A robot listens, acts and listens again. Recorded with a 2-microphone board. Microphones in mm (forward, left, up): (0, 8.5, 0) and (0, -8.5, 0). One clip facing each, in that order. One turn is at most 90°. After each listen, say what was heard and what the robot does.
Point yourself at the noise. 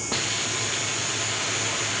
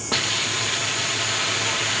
The hiss: about 20° right or 160° right. Turn 20° right.
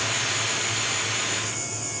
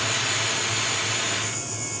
Facing the hiss.